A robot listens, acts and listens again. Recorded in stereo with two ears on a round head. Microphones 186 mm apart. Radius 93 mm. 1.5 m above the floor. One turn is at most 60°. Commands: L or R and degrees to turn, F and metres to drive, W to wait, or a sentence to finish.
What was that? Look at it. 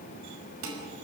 R60
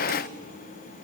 W
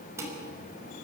R15
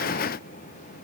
W
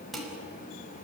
Facing the dishes clattering.